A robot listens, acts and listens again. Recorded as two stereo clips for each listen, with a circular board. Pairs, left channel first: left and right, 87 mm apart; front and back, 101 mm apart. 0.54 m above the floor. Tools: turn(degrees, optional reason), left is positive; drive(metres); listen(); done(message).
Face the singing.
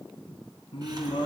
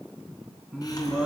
turn(degrees=100, reason="The singing: 100° left.")
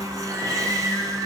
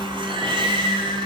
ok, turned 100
done("Facing the singing.")